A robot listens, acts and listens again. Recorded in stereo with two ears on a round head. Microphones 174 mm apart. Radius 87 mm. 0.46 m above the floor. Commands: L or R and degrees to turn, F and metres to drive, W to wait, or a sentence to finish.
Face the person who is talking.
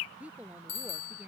R30
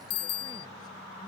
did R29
W
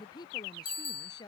L20
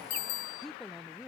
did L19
Facing the woman speaking.